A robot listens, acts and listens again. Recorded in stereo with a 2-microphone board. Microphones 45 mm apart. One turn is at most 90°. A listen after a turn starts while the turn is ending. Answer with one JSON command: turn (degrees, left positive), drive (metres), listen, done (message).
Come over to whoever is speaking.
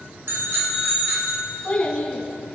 {"turn": 25}
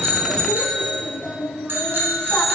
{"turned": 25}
{"drive": 1.0}
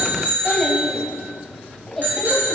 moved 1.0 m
{"turn": 10}
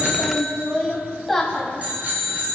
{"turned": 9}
{"drive": 1.0}
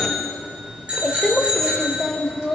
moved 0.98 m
{"drive": 1.0}
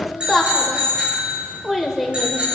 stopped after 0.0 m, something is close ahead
{"done": "Arrived at the child speaking, straight ahead."}